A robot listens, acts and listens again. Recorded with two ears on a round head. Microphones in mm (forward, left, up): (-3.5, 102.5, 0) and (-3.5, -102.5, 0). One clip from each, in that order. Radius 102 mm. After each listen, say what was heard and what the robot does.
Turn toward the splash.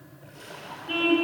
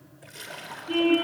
The splash: about 70° right or 110° right. Turn 70° right.
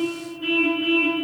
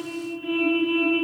Keep listening.
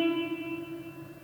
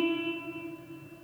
I heard a splash, but can't make it out now. It was about straight ahead or 40° right.